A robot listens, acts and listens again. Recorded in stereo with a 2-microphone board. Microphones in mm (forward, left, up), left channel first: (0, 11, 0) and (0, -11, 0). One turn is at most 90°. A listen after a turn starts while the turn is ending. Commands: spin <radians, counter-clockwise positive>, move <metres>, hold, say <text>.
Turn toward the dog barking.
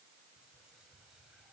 hold
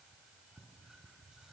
hold
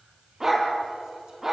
spin -0.52
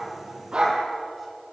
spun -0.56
spin -1.57
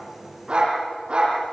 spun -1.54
spin -0.87
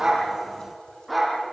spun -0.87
say Found it: a dog barking, straight ahead.